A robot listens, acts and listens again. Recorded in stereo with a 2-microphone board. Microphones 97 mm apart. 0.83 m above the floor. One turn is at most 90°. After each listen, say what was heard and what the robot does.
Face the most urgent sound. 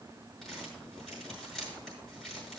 Keep listening.
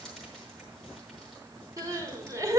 The crying: about 35° right or 145° right. Turn 35° right.
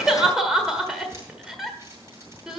Facing the crying, 1 to 2 m away.